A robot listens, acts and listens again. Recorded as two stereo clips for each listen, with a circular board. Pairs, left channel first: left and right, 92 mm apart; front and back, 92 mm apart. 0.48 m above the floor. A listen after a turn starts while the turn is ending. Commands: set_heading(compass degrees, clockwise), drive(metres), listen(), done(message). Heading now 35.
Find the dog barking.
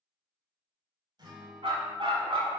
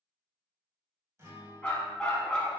set_heading(120)
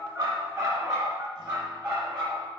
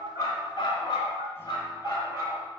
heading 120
set_heading(165)
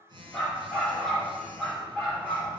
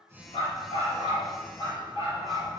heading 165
done("Found it: a dog barking, straight ahead.")